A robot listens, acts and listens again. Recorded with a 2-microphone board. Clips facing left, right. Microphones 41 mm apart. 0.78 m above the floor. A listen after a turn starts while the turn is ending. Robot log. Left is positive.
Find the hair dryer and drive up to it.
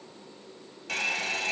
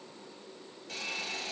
note: The hair dryer: about 75° left or 105° left.
cmd yaw +75
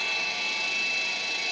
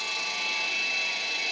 cmd fwd 1.0
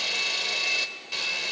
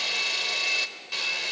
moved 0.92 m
cmd fwd 1.0
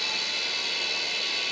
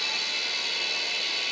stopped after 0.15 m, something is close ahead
end: I am next to the hair dryer.